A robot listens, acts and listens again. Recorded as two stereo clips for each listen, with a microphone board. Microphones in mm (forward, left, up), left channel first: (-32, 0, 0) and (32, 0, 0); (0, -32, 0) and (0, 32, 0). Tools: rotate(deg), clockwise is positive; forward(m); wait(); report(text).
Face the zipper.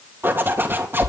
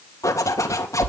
rotate(55)
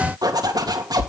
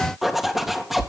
report("Found it: a zipper, straight ahead, 2 to 4 m away.")